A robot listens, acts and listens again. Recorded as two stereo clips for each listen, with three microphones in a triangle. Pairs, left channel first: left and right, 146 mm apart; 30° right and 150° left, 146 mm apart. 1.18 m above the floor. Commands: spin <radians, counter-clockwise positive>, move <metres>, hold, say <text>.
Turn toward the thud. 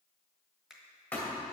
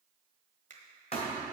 spin 0.26
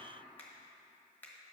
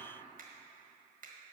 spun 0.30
say Facing where the thud came from. I can't hear it now.